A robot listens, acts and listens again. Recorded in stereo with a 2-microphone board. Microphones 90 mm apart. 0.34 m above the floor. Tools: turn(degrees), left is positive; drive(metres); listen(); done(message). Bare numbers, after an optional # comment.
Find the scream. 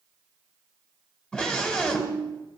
turn(30)
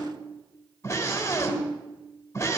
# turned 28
# So it is at 140° left.
turn(140)
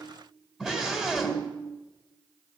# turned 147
# The scream is now 10° right.
turn(-10)
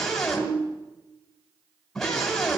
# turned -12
done("Found it: a scream, straight ahead.")